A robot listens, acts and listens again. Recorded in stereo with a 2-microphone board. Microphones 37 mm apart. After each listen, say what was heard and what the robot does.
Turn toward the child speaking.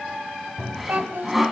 Turn 90° right.
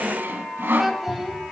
So it is at 10° right. Turn 10° right.
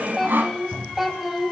Found it: a child speaking, straight ahead, 2 to 4 m away.